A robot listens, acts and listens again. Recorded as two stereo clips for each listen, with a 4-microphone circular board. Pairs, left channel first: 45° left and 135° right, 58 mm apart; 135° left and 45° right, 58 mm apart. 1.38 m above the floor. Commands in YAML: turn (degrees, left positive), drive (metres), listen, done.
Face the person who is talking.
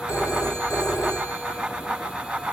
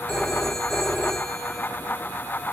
listen: true
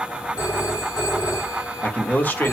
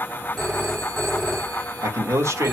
turn: -10
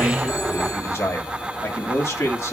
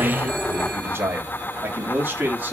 turn: 10
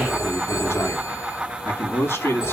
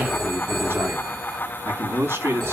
done: "Facing the man speaking, over 4 m away."